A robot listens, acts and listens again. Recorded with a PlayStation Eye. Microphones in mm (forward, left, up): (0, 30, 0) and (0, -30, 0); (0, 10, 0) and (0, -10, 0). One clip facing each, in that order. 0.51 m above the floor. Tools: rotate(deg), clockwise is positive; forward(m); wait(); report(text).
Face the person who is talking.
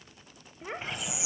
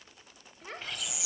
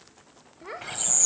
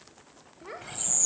rotate(-20)
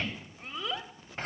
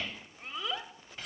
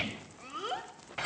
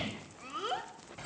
report("Found it: a child speaking, straight ahead, 1 to 2 m away.")